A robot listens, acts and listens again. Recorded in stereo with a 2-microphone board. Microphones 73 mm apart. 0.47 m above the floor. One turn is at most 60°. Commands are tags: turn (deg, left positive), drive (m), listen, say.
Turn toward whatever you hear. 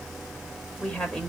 <turn deg="30"/>
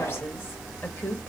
<turn deg="60"/>
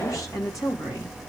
<turn deg="60"/>
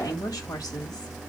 <turn deg="55"/>
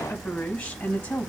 <turn deg="15"/>
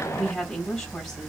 <say>Found it: a woman speaking, straight ahead.</say>